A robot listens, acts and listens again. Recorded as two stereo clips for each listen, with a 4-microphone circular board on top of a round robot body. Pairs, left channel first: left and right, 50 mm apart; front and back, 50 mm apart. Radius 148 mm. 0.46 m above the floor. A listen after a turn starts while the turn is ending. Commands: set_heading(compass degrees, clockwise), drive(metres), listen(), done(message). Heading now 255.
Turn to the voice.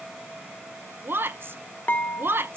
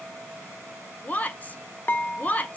set_heading(310)
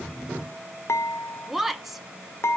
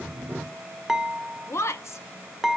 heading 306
done("Facing the woman speaking, 1 to 2 m away.")